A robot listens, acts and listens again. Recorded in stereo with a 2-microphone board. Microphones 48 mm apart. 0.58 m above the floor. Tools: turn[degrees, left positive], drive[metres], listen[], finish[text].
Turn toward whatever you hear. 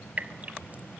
Thought: The dripping: about 30° right or 150° right.
Action: turn[-30]
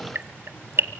Thought: So it is at 115° right.
Action: turn[-115]
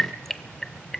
Action: finish[Facing the dripping.]